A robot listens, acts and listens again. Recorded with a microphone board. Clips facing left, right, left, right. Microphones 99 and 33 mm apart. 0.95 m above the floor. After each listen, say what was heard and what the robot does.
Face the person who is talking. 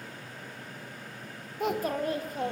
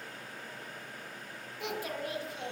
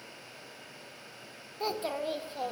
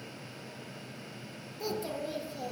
The child speaking: about 45° left or 135° left. Turn 45° left.
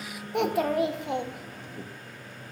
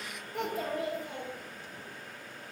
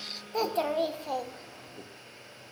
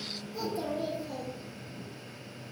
So it is at 90° left. Turn 90° left.
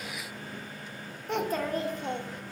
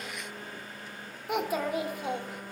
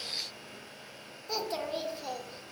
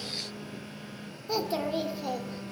The child speaking is now 10° right. Turn 10° right.
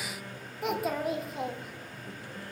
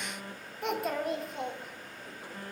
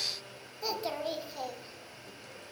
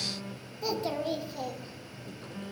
Facing the child speaking.